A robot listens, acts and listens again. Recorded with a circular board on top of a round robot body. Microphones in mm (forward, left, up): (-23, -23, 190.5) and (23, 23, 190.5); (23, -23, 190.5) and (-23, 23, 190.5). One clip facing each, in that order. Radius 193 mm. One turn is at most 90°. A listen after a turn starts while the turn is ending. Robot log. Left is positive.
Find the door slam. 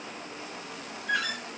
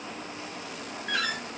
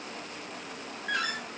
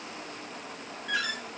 end: Found it: a door slam, straight ahead.